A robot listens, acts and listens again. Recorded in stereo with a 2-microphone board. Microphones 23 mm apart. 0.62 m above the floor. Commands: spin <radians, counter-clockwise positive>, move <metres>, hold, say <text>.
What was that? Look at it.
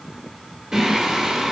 spin -0.52
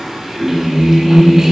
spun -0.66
spin -0.17
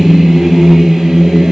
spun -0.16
spin -0.35
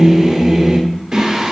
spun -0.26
spin -0.44
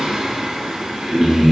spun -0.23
spin -0.26
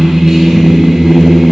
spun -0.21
say Facing the singing.